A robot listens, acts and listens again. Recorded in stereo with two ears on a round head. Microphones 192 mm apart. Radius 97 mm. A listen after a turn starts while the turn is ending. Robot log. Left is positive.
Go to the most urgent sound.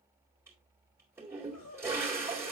cmd yaw +90
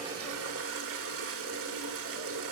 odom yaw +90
cmd idle
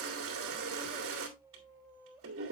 cmd fwd 1.0
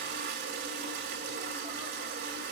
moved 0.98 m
cmd idle
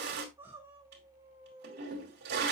note: The crying is now 10° right.
cmd yaw -10
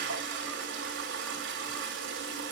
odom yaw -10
cmd idle
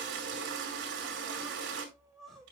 cmd fwd 1.0
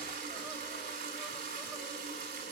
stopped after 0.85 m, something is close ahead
cmd idle
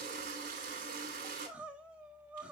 end: Arrived at the crying, straight ahead.